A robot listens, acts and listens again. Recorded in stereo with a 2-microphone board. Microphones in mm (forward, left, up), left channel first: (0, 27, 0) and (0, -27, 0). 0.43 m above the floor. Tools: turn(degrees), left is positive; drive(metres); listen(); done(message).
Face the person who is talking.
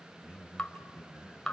turn(degrees=-15)
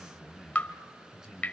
turn(degrees=-30)
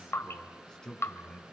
turn(degrees=10)
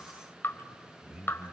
turn(degrees=-10)
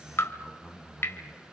done("Found it: a man speaking, straight ahead.")